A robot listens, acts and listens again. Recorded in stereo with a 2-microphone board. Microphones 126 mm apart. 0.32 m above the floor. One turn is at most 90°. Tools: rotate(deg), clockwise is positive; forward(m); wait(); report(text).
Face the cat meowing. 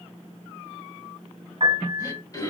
wait()
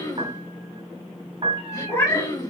rotate(-20)
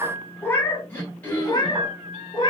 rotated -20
rotate(-35)
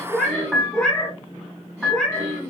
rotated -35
report("Found it: a cat meowing, straight ahead, 1 to 2 m away.")